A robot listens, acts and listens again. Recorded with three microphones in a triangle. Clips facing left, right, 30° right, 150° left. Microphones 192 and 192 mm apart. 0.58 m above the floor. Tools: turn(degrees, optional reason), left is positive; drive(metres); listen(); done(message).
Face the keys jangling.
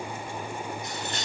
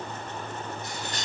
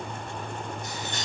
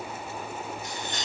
turn(degrees=125, reason="The keys jangling: 125° left.")
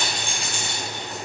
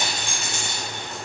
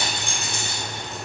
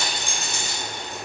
turn(degrees=-50, reason="The keys jangling is now 50° right.")
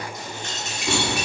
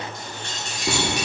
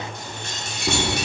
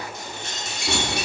turn(degrees=-50, reason="The keys jangling is now 50° right.")
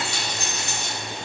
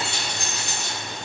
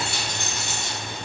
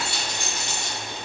turn(degrees=-45, reason="The keys jangling is now 45° right.")
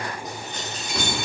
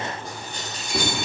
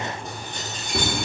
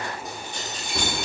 turn(degrees=-35, reason="The keys jangling is now 35° right.")
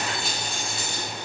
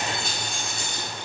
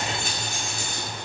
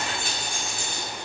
done("Facing the keys jangling.")